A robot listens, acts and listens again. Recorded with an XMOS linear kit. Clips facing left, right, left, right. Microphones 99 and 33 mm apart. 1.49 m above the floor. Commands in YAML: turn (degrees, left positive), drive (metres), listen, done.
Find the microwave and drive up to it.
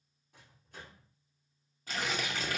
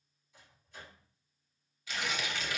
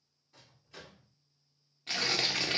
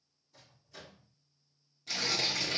turn: 60
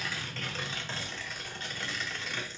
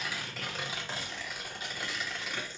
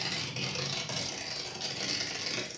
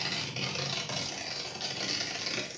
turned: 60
listen: true
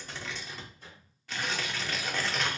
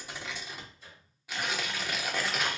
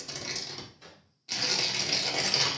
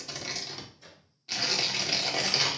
turn: 60
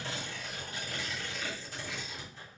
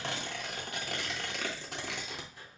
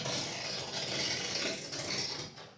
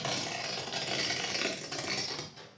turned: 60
turn: -20
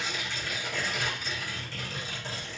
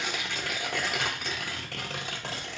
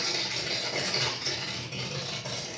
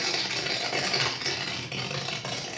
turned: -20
listen: true
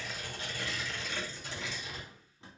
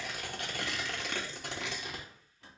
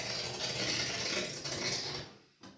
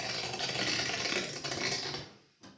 listen: true
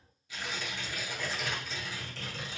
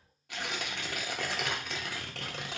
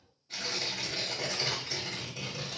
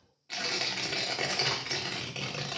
done: "I heard a microwave from this way, but can't make it out now. I did not reach it."